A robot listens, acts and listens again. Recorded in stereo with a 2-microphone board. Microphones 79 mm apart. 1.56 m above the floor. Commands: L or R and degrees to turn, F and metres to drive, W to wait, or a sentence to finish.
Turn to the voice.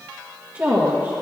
R30
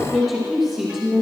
R15
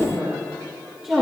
R30
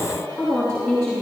Found it: a woman speaking, straight ahead.